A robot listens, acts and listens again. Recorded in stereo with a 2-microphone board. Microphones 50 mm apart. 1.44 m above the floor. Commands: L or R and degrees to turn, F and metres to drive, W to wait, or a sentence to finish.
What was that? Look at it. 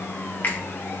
L40
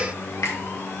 L100
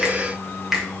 Found it: a finger snap, straight ahead.